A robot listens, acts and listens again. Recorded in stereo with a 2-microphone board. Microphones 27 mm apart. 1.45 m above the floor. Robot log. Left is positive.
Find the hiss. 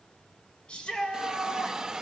note: The hiss: about 25° right or 155° right.
cmd yaw -25
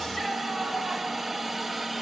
end: Facing the hiss.